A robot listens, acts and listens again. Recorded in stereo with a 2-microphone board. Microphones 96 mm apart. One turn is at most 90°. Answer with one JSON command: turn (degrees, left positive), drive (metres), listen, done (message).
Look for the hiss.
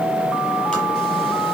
{"listen": true}
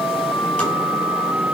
{"listen": true}
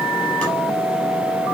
{"done": "I can't make out a hiss."}